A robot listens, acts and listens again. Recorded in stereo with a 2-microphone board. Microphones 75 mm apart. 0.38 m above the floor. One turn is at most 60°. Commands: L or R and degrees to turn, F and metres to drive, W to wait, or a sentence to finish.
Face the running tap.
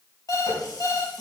L60
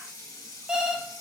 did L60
L50
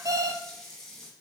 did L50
Facing the running tap.